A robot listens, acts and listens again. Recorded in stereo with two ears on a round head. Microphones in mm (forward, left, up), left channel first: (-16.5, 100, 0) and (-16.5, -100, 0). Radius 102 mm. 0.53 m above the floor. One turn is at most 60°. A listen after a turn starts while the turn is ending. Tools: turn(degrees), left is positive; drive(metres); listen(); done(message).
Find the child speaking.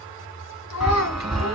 turn(degrees=60)
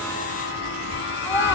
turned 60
listen()
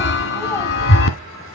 listen()
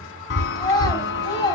turn(degrees=20)
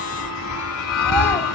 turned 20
listen()
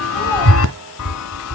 listen()
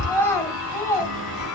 turn(degrees=10)
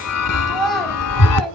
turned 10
done("Facing the child speaking.")